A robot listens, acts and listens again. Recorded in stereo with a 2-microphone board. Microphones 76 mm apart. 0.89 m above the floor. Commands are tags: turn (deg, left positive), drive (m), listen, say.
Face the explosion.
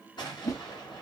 <turn deg="90"/>
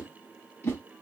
<say>I heard an explosion from this way, but can't make it out now.</say>